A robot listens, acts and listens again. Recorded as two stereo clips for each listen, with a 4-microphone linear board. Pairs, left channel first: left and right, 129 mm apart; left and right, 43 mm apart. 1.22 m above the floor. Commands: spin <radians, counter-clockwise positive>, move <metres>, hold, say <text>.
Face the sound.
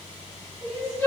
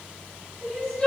spin 0.44
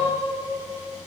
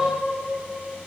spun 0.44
hold
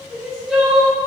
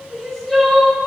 say Found it: crying, straight ahead, 2 to 4 m away.